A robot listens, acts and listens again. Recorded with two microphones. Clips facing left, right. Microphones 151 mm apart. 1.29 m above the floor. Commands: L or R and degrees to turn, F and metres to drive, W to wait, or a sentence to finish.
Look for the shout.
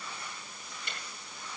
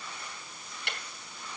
W
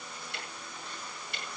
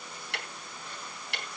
W
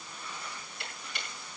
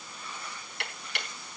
I can't make out a shout to turn to.